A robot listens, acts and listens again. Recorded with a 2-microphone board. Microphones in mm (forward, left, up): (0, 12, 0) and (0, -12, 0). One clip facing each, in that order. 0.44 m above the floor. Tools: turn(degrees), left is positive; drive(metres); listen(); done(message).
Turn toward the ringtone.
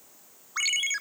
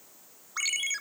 turn(degrees=20)
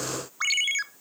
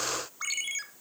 turn(degrees=135)
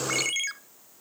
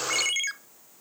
turn(degrees=-15)
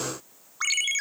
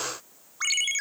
done("Found it: a ringtone, straight ahead.")